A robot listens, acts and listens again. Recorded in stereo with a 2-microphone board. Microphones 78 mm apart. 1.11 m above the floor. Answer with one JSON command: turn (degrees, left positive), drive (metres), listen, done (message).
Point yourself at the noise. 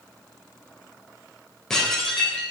{"turn": 30}
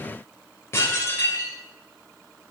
{"turn": 145}
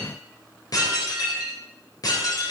{"turn": 50}
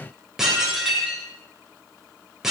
{"done": "Facing the dishes clattering, 2 to 4 m away."}